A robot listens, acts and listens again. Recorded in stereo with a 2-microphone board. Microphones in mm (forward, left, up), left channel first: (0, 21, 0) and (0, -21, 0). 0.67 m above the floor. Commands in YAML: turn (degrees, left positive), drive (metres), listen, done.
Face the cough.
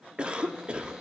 turn: -25
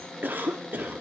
turn: -125
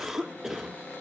turn: -10
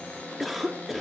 done: "Facing the cough."